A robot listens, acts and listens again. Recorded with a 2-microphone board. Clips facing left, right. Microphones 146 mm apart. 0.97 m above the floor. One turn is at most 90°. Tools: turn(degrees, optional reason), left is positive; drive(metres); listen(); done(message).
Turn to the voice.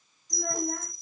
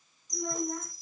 turn(degrees=65, reason="The child speaking: about 65° left or 115° left.")
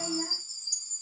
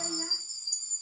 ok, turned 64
turn(degrees=50, reason="So it is at 50° left.")
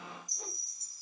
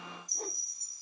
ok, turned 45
listen()
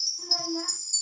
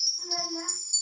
done("Facing the child speaking, over 4 m away.")